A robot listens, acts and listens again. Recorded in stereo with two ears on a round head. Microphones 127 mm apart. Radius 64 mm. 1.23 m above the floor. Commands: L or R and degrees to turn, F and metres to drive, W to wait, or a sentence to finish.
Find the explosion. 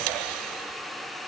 W
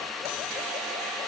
W
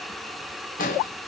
L65
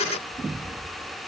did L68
W
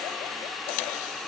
I heard an explosion, but can't make it out now. It was about 5° right or 50° left.